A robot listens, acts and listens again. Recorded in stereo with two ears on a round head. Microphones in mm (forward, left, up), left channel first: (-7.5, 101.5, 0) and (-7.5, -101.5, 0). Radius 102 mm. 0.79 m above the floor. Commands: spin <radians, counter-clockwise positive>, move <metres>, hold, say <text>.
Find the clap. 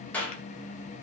spin 0.52
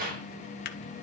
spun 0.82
spin -0.70
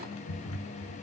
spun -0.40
spin -0.35
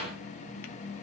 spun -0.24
hold
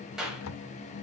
say Found it: a clap, straight ahead, 2 to 4 m away.